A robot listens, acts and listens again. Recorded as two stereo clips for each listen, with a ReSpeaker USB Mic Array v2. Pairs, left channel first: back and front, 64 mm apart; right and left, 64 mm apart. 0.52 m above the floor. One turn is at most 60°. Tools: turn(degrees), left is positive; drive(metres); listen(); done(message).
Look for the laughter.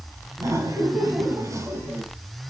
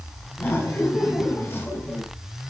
turn(degrees=-30)
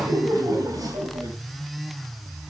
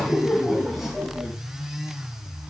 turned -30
done("Facing the laughter, over 4 m away.")